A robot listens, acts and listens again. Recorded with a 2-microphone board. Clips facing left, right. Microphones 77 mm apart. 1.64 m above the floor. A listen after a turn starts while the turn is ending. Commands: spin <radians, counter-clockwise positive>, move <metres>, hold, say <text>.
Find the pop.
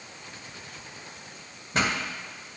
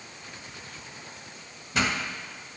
spin 0.70
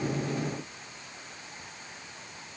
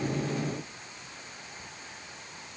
hold
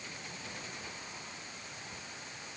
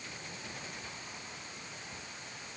say I heard a pop, but can't make it out now. It was about straight ahead or 100° left.